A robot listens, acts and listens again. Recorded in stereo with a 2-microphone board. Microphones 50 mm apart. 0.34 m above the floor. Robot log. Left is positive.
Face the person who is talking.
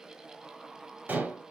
cmd idle
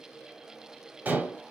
cmd idle
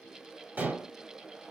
end: I can't make out anyone speaking to turn to.